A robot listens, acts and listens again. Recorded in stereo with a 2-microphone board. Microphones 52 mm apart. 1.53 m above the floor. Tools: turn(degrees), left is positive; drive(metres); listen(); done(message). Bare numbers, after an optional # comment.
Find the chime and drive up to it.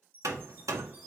# The chime: about 40° right or 140° right.
turn(-40)
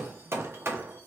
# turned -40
listen()
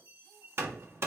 # So it is at 100° right.
turn(-100)
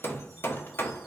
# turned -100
listen()
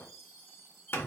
drive(1.0)
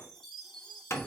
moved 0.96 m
# The chime is now 10° left.
turn(10)
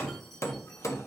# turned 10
listen()
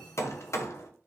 listen()
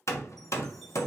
done("Facing where the chime came from. I can't hear it now. I did not reach it.")